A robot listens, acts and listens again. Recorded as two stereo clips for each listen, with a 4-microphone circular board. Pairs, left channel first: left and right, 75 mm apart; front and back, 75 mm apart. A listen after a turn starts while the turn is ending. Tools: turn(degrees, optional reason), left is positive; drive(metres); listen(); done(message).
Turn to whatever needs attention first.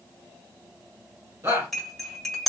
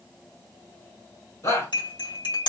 turn(degrees=-40, reason="The shout: 40° right.")
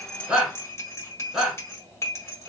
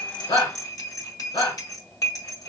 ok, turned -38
done("Found it: a shout, straight ahead, 2 to 4 m away.")